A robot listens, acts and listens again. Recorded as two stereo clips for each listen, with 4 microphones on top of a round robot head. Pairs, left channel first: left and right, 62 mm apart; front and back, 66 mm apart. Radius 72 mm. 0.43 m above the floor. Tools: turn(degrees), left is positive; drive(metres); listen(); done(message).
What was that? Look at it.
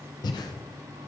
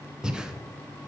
turn(degrees=100)
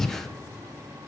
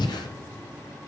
done("Found it: breathing, straight ahead, under 1 m away.")